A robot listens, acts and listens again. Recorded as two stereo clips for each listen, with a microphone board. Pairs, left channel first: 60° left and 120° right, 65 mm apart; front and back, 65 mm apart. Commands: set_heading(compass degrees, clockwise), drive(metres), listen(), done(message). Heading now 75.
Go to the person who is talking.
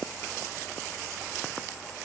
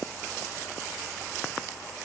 listen()
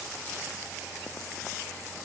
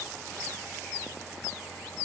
listen()
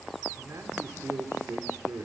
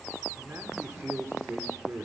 set_heading(210)
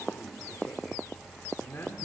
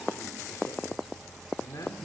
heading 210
set_heading(200)
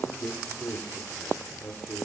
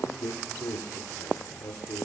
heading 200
drive(1.0)
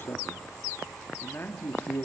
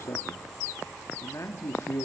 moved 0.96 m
set_heading(185)
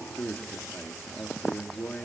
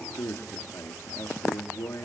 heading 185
drive(1.0)
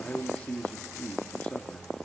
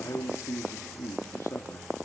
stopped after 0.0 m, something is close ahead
done("Arrived at the man speaking, straight ahead.")